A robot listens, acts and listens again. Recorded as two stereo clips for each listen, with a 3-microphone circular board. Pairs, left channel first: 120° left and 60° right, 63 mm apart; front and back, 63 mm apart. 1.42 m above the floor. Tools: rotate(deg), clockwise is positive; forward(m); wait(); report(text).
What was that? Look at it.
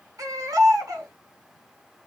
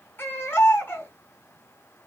rotate(50)
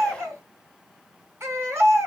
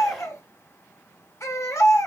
rotate(20)
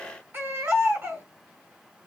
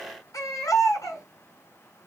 rotate(10)
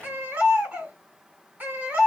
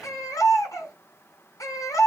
report("Found it: a baby crying, straight ahead, 2 to 4 m away.")